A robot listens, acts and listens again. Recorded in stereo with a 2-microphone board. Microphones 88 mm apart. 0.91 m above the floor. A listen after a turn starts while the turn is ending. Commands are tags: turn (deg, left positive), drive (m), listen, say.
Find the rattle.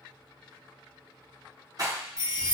<turn deg="-45"/>
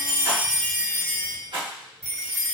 <turn deg="-90"/>
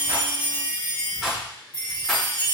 <say>Facing the rattle, under 1 m away.</say>